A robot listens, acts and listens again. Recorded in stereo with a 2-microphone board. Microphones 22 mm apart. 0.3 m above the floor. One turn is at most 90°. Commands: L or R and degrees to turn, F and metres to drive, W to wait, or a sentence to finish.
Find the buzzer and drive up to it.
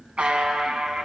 R55
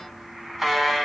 R15
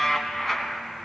F1.0
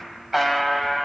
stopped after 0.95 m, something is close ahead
R10
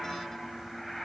W
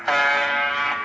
I am next to the buzzer.